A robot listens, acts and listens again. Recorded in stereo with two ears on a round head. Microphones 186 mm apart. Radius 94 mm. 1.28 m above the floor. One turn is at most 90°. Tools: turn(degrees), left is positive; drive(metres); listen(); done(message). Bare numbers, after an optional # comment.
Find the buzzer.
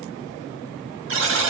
# The buzzer: about 65° right or 115° right.
turn(-65)
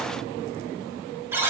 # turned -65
# So it is at 15° right.
turn(-15)
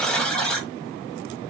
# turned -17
done("Facing the buzzer, 1 to 2 m away.")